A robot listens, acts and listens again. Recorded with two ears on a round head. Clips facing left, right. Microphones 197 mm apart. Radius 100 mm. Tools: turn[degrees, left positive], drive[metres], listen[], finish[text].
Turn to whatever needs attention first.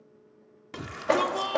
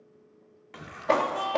Thought: The shout: about 55° left or 125° left.
Action: turn[55]
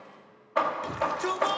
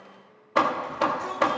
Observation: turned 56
Thought: So it is at 65° left.
Action: turn[65]
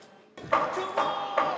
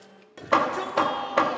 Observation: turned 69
Action: finish[Found it: a shout, straight ahead.]